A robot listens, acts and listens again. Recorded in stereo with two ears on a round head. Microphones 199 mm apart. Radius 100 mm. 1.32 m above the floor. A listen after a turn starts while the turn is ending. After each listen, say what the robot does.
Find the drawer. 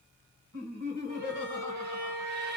Keep listening.
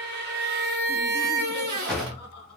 Turn 30° left.
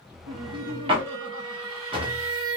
Turn 25° right.
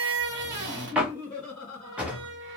Found it: a drawer, straight ahead.